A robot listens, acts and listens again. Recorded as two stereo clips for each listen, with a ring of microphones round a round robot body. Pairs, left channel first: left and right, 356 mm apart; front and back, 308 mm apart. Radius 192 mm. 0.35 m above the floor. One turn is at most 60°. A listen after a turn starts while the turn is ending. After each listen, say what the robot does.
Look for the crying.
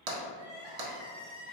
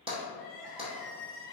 Turn 60° right.
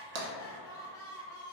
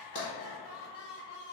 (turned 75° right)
Turn 10° left.
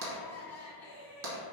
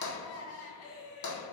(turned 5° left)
Found it: crying, straight ahead, 1 to 2 m away.